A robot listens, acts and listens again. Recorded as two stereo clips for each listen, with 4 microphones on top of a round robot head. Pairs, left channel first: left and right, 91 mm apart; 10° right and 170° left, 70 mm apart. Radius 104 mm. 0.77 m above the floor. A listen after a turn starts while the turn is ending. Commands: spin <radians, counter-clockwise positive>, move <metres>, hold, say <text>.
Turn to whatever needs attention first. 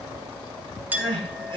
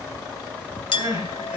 spin -2.18
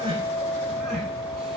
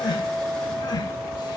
hold
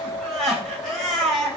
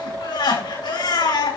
say Found it: crying, straight ahead.